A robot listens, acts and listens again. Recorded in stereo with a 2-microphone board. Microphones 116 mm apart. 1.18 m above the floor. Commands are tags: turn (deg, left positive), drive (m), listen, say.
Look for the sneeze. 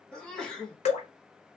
<turn deg="30"/>
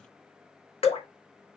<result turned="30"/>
<listen/>
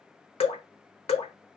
<say>I heard a sneeze, but can't make it out now. It was about 20° right or 140° left.</say>